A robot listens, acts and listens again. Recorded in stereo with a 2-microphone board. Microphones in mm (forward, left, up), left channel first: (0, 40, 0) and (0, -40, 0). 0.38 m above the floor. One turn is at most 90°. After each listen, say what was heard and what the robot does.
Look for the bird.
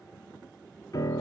Keep listening.
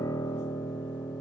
Keep listening.
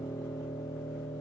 I can't make out a bird, only a piano.